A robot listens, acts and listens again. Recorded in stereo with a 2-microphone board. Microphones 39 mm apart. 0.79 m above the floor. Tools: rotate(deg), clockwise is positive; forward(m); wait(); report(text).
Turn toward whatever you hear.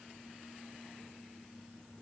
wait()
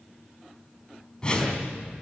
rotate(-20)
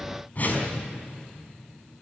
rotate(-140)
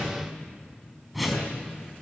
report("Found it: a whoosh, straight ahead, over 4 m away.")